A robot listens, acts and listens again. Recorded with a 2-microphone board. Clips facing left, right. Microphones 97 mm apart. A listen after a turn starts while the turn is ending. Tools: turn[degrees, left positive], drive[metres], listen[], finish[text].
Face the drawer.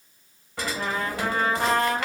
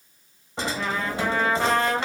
Thought: The drawer: about 25° right or 155° right.
Action: turn[-25]
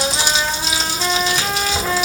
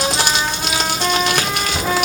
Action: finish[Found it: a drawer, straight ahead.]